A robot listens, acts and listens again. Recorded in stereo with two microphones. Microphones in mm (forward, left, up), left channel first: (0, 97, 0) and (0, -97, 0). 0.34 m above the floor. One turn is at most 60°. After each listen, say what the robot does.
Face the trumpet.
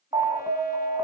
Keep listening.
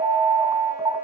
Keep listening.
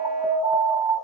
I can't make out a trumpet, only an alarm.